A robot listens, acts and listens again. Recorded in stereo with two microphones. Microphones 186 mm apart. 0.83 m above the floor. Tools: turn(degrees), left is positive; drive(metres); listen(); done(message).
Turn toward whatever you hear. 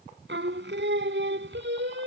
turn(degrees=-90)
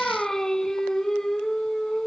done("Found it: singing, straight ahead.")